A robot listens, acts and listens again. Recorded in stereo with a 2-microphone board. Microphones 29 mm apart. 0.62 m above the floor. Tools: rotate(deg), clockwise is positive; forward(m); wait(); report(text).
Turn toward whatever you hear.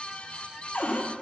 rotate(-90)
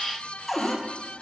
report("Facing the cupboard door, under 1 m away.")